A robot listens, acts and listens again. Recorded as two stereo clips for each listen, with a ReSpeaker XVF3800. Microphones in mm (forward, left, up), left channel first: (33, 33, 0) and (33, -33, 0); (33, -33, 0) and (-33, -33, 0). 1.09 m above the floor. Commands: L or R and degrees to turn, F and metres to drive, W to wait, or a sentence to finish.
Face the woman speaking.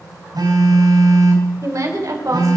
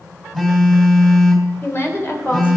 R55
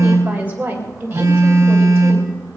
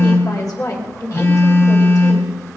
R30
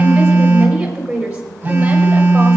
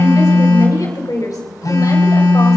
R15
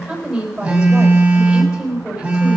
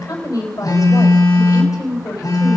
R10
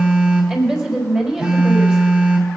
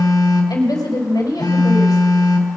Facing the woman speaking.